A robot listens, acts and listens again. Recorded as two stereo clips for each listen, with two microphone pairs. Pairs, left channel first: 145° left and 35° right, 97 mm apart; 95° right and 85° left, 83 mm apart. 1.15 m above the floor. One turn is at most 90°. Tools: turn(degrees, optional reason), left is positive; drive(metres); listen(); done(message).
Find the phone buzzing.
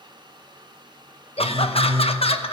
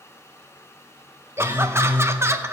turn(degrees=-30, reason="The phone buzzing: 30° right.")
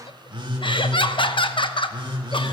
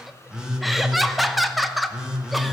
done("Facing the phone buzzing.")